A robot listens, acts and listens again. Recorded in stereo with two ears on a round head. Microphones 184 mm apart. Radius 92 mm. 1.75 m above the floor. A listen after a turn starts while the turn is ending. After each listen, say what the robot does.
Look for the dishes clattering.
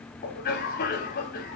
Keep listening.
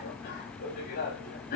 Keep listening.
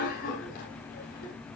I can't make out dishes clattering, only a cough.